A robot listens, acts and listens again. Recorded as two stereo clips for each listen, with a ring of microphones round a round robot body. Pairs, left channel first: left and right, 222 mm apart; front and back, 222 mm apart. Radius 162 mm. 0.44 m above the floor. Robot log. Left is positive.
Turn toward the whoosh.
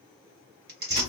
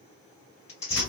cmd idle
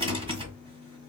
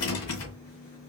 cmd idle
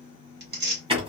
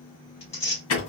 end: I can't make out a whoosh, only tearing paper and a rattle.